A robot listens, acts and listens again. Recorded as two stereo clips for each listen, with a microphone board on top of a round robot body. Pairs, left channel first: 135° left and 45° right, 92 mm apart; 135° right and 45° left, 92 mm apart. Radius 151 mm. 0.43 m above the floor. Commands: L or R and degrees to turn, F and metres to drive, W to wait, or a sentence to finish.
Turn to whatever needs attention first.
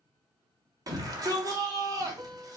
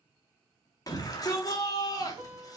R90
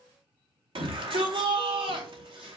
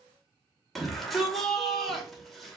R45
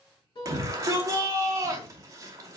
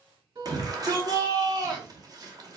Facing the shout.